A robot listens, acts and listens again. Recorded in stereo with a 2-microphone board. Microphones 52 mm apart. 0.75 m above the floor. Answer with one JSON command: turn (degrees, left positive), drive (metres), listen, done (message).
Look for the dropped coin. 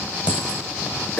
{"turn": -25}
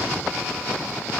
{"listen": true}
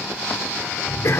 {"done": "I heard a dropped coin, but can't make it out now. It was about straight ahead or 130° right."}